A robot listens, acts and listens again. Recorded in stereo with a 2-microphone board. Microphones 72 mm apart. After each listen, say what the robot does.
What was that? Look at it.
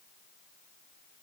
Keep listening.
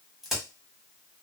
Turn 30° left.
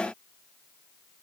Keep listening.
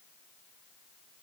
I heard a crack, but can't make it out now. It was about 30° right or 150° left.